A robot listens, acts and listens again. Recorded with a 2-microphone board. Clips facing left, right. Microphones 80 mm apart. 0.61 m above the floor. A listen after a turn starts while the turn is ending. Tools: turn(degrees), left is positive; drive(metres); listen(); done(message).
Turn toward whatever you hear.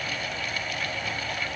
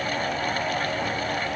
listen()
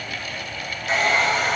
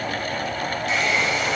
turn(degrees=40)
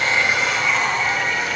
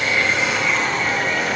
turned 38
done("Facing the hair dryer.")